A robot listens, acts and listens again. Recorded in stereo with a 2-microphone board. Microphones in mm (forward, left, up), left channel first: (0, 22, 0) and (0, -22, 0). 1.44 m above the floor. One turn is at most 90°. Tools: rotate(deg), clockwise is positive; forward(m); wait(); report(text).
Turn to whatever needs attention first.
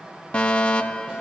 rotate(-30)
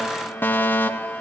rotate(-90)
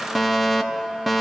report("Found it: a fire alarm, straight ahead.")